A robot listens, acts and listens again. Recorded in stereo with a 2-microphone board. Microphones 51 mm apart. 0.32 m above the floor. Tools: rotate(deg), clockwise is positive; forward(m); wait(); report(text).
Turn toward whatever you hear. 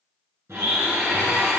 rotate(60)
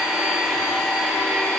report("Facing the blender.")